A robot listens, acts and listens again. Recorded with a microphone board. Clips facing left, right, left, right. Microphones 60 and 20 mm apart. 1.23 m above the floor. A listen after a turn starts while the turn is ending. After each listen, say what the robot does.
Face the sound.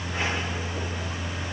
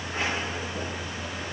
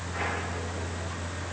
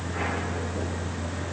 Keep listening.
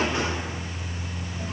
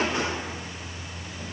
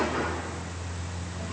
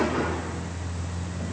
Keep listening.
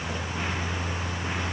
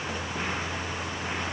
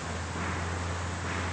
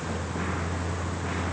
I can't make out anything to turn to.